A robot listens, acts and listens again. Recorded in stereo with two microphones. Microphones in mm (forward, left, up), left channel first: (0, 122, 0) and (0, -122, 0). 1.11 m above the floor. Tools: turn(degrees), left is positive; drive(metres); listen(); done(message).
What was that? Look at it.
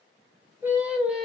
turn(degrees=30)
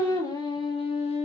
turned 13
turn(degrees=25)
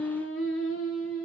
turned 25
turn(degrees=115)
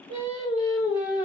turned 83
turn(degrees=15)
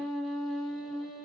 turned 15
done("Facing the singing.")